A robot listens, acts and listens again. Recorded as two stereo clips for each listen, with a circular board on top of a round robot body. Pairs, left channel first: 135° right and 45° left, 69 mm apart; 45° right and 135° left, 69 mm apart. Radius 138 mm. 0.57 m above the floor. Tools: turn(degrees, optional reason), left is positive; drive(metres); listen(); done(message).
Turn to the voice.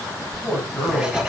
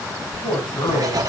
turn(degrees=-50, reason="The man speaking: 50° right.")
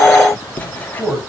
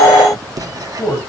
turn(degrees=-15, reason="The man speaking is now 15° right.")
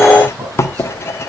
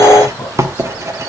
listen()
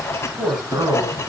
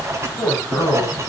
done("Found it: a man speaking, straight ahead, over 4 m away.")